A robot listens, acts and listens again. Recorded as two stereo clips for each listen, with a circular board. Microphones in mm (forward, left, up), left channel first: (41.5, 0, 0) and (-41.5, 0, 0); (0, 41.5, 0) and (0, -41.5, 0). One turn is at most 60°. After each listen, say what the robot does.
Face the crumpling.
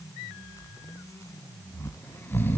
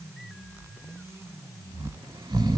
Keep listening.
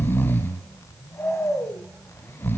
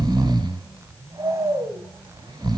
Keep listening.
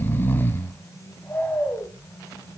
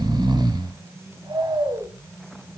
I can't make out crumpling, only snoring.